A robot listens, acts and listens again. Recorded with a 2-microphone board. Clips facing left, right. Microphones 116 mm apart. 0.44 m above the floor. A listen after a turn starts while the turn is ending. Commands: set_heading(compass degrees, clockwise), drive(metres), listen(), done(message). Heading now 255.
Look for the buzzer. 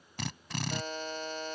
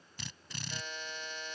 set_heading(210)
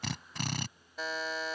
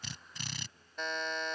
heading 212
done("Found it: a buzzer, straight ahead.")